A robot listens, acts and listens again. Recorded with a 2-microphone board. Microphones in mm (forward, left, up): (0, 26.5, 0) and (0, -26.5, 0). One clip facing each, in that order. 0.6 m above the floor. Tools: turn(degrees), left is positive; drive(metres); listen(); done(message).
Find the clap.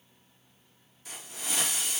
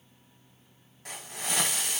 listen()
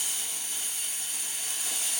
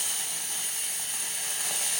listen()
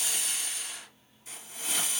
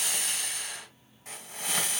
done("I can't make out a clap, only a hiss.")